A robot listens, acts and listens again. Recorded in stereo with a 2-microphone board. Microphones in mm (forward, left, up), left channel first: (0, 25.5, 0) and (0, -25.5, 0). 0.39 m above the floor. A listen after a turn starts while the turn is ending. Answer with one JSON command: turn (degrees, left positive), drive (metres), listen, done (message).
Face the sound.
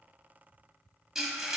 {"turn": -30}
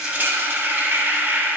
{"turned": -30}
{"turn": -140}
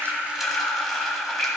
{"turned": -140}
{"done": "Facing the frying."}